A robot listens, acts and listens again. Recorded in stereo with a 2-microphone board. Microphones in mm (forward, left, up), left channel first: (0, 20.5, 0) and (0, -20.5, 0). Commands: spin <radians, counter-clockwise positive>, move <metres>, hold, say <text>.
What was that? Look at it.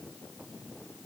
hold
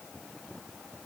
hold
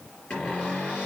spin 0.44
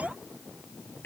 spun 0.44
spin 2.18
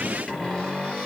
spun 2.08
spin 0.17
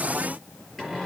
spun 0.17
say Found it: a cupboard door, straight ahead.